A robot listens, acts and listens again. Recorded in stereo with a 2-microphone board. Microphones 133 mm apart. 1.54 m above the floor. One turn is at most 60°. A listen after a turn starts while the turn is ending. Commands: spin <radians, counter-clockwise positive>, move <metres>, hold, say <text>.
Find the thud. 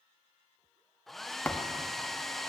spin 0.52
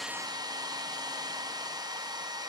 hold
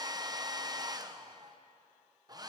say I heard a thud, but can't make it out now. It was about 20° right or 140° left.